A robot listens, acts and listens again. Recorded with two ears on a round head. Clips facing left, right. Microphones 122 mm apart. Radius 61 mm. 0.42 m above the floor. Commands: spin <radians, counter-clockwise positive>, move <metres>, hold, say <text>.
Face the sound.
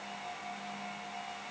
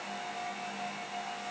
hold
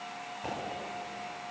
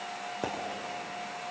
spin -1.57
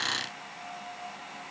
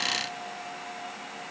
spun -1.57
say Facing where the pop came from. I can't hear it now.